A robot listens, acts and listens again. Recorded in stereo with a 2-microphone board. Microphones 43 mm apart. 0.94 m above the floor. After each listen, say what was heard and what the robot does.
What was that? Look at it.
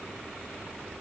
Keep listening.
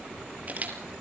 The camera shutter: about 35° right or 145° right. Turn 35° right.
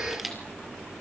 Found it: a camera shutter, straight ahead.